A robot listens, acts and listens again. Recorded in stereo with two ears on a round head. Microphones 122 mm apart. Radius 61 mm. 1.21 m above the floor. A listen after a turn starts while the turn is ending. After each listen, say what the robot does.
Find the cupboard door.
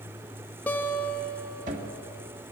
Turn 60° right.
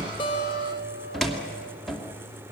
Found it: a cupboard door, straight ahead.